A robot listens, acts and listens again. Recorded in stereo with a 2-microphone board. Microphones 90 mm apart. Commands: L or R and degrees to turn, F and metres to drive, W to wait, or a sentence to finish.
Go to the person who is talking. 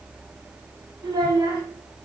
R55
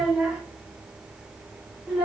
R10
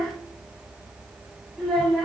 F1.0
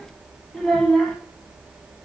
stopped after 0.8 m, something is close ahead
L10
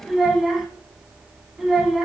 I am next to the child speaking.